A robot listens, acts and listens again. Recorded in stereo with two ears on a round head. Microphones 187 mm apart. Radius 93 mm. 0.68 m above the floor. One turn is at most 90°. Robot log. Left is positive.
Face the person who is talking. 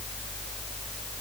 cmd idle
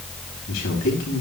note: The man speaking: about 70° left or 110° left.
cmd yaw +70
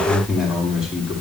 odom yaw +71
end: Facing the man speaking.